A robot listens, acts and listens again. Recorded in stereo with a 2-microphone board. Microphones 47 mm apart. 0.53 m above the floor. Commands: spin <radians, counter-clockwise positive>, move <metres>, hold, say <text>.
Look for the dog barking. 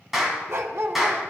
spin -1.13
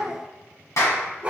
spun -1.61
spin -0.35
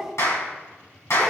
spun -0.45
say Facing the dog barking, 1 to 2 m away.